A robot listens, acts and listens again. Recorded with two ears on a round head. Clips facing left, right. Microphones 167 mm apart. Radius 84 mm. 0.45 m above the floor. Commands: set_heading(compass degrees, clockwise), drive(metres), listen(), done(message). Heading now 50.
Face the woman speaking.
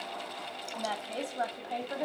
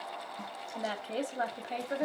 set_heading(80)
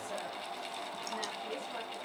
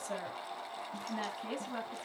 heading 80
set_heading(200)
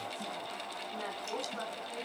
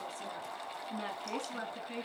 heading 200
set_heading(235)
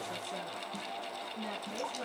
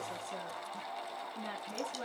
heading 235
done("Facing the woman speaking.")